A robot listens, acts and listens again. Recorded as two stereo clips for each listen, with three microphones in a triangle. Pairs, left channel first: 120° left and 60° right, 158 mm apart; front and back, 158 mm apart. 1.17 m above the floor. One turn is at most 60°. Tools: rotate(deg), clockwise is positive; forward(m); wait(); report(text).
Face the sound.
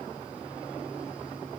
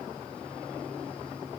wait()
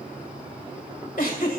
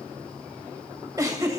rotate(-60)
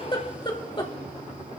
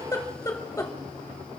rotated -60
rotate(-60)
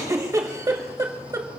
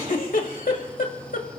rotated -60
report("Facing the giggle.")